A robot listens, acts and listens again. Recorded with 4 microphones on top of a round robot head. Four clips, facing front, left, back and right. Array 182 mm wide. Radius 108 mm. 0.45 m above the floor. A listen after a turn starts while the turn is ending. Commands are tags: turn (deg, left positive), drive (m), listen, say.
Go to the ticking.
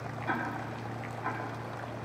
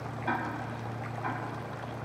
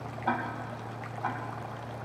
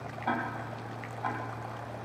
<turn deg="-140"/>
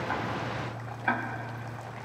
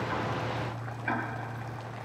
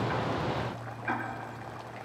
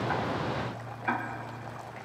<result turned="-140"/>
<drive m="1.0"/>
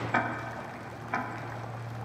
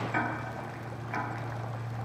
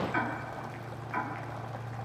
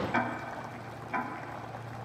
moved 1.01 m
<turn deg="-10"/>
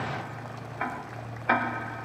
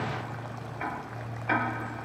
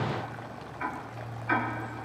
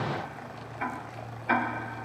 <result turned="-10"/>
<drive m="1.0"/>
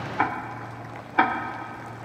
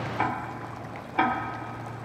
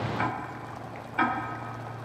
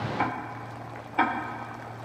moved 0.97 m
<drive m="1.0"/>
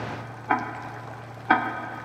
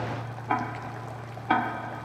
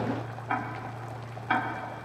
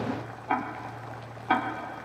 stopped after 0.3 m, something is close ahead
<say>I am next to the ticking.</say>